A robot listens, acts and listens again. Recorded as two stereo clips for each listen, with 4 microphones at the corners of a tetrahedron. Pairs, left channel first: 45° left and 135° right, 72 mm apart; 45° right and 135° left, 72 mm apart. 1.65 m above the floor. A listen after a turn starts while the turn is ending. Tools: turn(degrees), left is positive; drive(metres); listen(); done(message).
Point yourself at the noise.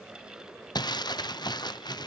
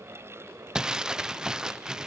turn(degrees=55)
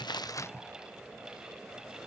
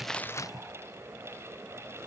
listen()
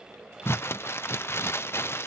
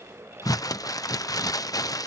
turn(degrees=-10)
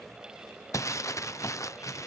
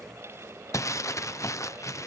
done("Facing the crumpling.")